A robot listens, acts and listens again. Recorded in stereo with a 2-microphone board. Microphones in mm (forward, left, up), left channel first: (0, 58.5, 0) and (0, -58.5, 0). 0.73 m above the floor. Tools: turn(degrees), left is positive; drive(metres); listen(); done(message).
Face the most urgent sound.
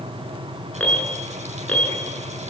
turn(degrees=30)
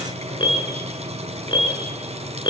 turn(degrees=140)
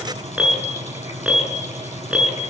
turn(degrees=-10)
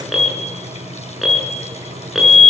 done("Facing the alarm.")